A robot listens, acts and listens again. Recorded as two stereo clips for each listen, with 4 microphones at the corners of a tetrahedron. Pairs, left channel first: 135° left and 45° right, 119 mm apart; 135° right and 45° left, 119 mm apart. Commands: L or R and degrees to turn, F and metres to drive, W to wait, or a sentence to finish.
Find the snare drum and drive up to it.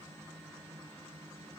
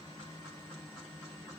W
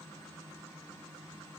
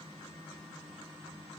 W
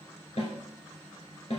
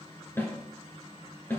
L155
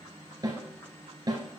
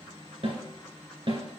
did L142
L10
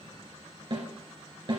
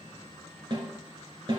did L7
F1.0
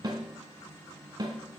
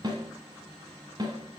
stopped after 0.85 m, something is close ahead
Arrived at the snare drum, straight ahead.